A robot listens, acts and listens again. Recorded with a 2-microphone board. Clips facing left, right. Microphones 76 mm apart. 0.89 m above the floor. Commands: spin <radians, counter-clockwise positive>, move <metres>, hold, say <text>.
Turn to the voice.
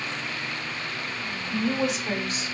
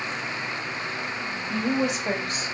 spin -0.79
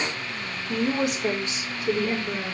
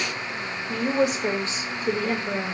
spin -0.61
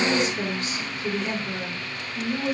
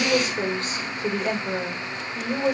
spin -0.79
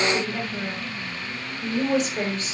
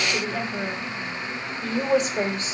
spin -0.26
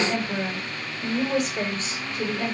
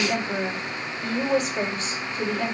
say Found it: a woman speaking, straight ahead.